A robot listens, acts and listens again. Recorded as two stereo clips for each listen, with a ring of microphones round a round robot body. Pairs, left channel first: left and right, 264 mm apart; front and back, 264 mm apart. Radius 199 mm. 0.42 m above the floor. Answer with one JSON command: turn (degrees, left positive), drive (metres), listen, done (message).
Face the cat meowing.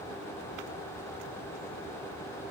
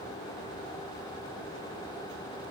{"listen": true}
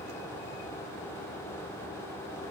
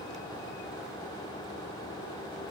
{"listen": true}
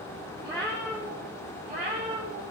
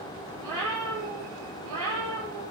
{"turn": -165}
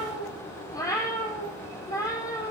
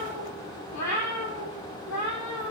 {"turn": 15}
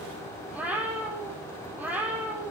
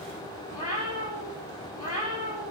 {"done": "Found it: a cat meowing, straight ahead, over 4 m away."}